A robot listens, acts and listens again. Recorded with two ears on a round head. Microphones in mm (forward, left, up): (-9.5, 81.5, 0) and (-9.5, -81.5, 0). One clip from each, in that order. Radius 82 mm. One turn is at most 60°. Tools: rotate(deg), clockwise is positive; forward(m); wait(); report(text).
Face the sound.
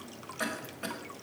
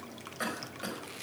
rotate(30)
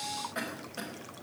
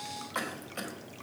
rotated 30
rotate(60)
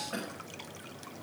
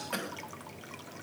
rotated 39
rotate(60)
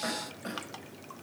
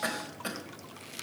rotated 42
rotate(60)
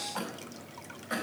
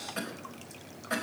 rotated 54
report("Facing the cough.")